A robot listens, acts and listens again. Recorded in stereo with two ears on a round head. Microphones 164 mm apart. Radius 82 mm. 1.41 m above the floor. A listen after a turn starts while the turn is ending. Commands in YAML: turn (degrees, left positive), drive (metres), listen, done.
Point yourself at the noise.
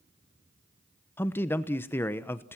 turn: 30
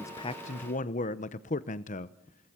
turn: 140
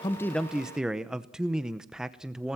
done: "Facing the man speaking, under 1 m away."